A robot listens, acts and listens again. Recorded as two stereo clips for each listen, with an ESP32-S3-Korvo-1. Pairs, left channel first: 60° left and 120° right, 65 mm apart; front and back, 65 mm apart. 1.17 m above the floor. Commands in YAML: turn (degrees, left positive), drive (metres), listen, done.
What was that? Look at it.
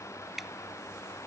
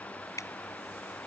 turn: -35
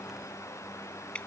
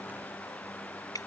turn: -10
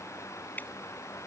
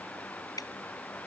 done: "Found it: dripping, straight ahead."